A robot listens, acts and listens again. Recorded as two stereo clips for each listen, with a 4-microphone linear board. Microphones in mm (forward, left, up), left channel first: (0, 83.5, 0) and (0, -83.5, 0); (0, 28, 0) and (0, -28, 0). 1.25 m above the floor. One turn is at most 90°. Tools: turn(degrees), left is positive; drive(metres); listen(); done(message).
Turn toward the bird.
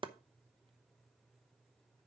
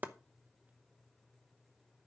listen()
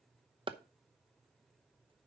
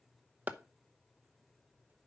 listen()
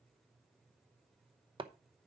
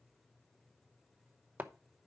done("I can't make out a bird to turn to.")